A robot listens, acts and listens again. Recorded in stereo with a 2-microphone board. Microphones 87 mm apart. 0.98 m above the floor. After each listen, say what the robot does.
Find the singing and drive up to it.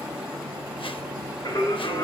Turn 50° left.
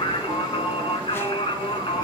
Turn 80° left.
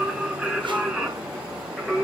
Drive 1.0 m forward.
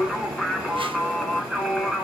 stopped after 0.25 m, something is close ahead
Blocked. The singing is further on, straight ahead.